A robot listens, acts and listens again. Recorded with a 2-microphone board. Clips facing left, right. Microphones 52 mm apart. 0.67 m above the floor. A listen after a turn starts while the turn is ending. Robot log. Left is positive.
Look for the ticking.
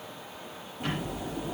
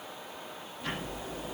cmd yaw +90
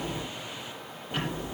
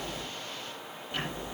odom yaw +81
note: So it is at 20° left.
cmd yaw +20
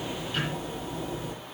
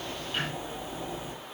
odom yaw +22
end: Found it: ticking, straight ahead.